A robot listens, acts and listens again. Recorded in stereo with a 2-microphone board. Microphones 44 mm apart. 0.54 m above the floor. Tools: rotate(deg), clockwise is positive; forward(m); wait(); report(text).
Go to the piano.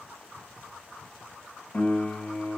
rotate(-40)
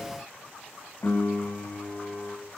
rotate(-95)
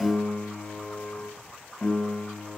rotate(-35)
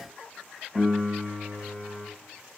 forward(1.0)
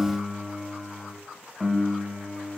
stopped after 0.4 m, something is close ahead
report("Something is in my way. I am facing the piano but have not reached it.")